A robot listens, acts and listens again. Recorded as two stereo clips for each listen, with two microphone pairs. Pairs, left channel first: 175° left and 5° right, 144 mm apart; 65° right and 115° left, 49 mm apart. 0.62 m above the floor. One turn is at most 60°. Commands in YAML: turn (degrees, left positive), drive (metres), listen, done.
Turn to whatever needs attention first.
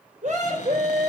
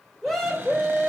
turn: 20
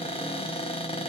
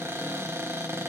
listen: true
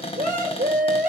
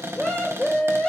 done: "Facing the scream."